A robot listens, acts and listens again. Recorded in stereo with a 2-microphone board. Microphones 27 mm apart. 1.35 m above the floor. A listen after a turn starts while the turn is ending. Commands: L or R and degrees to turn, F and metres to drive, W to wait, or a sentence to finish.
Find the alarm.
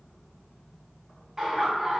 W
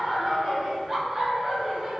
W
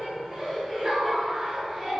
I can't make out an alarm, only laughter.